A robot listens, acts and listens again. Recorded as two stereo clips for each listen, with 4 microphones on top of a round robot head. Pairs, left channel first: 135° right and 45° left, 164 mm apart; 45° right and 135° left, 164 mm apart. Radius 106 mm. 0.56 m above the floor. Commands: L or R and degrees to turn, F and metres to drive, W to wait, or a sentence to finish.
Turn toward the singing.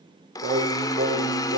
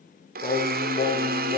L20
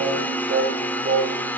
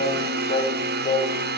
L15
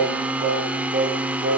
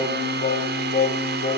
Found it: singing, straight ahead, 2 to 4 m away.